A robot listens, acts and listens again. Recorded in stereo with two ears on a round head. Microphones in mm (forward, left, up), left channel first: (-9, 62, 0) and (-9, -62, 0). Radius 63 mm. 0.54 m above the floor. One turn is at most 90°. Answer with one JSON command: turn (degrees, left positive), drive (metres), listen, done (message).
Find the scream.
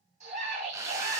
{"turn": -50}
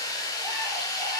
{"listen": true}
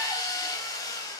{"listen": true}
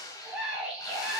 {"done": "Facing the scream."}